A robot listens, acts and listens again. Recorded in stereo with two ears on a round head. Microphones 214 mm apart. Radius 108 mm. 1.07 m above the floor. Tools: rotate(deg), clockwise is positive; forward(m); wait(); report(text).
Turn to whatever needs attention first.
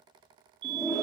rotate(45)
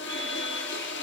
wait()
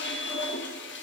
wait()
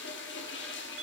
report("I heard a fire alarm, but can't make it out now. It was about straight ahead or 90° right.")